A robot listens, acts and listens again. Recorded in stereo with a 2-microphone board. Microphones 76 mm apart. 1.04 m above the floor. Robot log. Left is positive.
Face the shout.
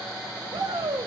note: The shout: about 70° right or 110° right.
cmd yaw -70
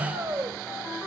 note: So it is at 35° right.
cmd yaw -35
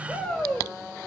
end: Found it: a shout, straight ahead.